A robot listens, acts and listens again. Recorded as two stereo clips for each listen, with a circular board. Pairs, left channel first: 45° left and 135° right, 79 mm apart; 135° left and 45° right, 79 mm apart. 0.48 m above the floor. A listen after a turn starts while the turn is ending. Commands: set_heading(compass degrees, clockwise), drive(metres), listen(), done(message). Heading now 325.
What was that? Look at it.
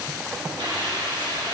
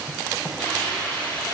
set_heading(115)
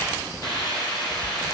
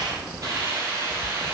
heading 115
set_heading(105)
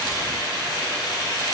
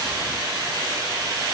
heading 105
done("Found it: a hiss, straight ahead.")